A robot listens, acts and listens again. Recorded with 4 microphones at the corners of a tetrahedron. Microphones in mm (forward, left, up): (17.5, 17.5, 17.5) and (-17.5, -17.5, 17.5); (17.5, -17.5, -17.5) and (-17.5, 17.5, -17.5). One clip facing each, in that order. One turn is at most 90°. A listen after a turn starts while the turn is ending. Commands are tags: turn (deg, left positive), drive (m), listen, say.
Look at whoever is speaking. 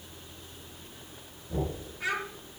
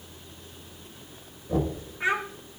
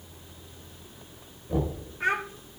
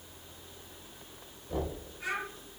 <turn deg="-75"/>
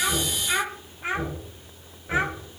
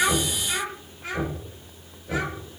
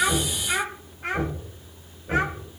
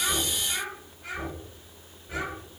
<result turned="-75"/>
<turn deg="-15"/>
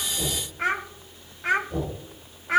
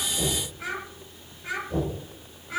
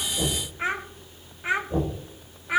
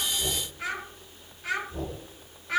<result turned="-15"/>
<turn deg="25"/>
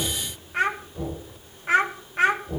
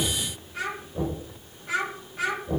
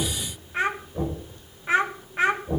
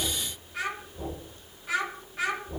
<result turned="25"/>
<say>Facing the child speaking.</say>